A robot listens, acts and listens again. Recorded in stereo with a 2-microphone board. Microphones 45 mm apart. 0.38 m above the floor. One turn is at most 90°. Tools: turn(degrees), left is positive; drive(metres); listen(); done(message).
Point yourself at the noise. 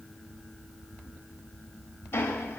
turn(degrees=55)
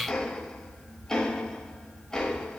turn(degrees=15)
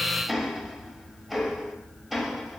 done("Facing the ticking.")